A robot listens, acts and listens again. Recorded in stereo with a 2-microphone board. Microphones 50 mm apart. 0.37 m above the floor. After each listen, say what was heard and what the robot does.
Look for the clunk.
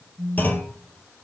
The clunk: about 35° left or 145° left. Turn 35° left.
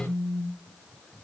Keep listening.
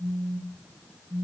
I heard a clunk, but can't make it out now. It was about straight ahead or 110° left.